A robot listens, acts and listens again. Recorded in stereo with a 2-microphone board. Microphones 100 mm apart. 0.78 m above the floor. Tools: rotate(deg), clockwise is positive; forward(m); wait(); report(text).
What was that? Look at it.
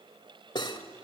rotate(-50)
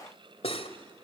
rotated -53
rotate(-80)
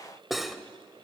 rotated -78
report("Facing the cutlery clinking.")